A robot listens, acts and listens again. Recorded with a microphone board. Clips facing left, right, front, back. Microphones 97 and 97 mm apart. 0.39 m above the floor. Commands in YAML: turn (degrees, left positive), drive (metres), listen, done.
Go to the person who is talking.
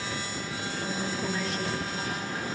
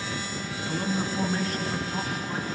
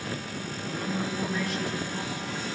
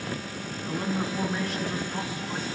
turn: -120
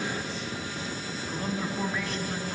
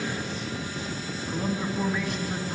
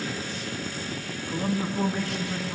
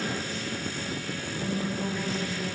drive: 1.0
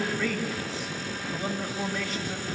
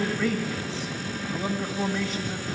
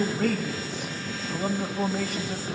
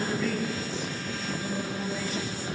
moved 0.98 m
drive: 1.0
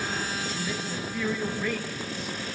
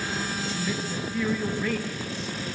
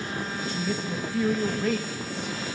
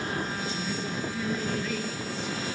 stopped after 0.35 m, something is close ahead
turn: 10
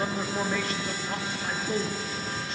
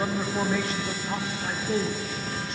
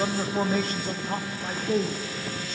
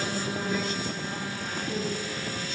done: "Arrived at the man speaking, straight ahead."